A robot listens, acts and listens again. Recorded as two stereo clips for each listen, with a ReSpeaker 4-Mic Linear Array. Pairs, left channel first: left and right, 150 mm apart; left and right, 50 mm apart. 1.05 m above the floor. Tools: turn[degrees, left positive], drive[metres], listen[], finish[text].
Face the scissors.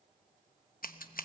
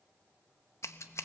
Thought: The scissors: about 70° left or 110° left.
Action: turn[70]
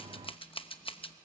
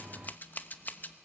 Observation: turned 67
Thought: So it is at 35° left.
Action: turn[35]
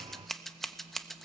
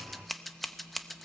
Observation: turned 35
Action: finish[Found it: scissors, straight ahead.]